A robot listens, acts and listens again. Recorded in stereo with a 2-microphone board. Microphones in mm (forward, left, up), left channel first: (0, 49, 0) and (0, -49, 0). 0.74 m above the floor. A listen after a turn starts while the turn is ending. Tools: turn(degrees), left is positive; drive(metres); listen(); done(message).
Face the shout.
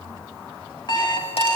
listen()
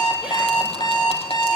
listen()
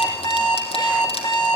done("I can't make out a shout, only an alarm clock.")